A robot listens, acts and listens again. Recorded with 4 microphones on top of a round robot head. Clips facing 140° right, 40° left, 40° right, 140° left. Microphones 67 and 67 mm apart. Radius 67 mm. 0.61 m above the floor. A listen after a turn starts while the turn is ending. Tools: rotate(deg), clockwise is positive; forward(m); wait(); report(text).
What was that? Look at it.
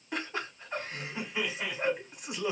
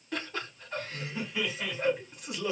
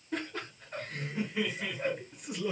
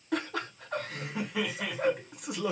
rotate(-150)
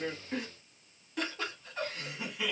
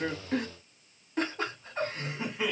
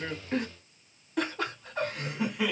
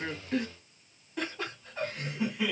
rotate(20)
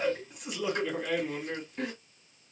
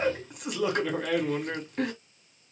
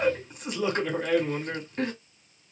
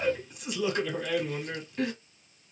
rotate(-10)
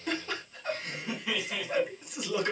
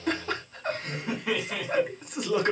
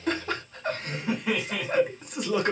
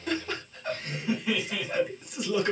report("Facing the laughter, 2 to 4 m away.")